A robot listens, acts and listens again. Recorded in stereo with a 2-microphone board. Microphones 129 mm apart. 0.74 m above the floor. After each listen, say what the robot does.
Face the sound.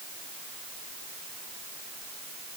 Keep listening.
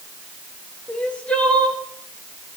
Turn 30° left.
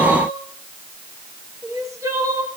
Turn 25° right.
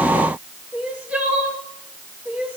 Turn 10° right.
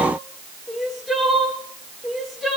Found it: crying, straight ahead.